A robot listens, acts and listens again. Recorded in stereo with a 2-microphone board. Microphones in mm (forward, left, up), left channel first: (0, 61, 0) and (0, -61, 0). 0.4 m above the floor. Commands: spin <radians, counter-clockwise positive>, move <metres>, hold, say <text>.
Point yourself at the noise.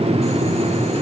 hold
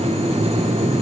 hold
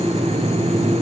say I can't make out anything to turn to.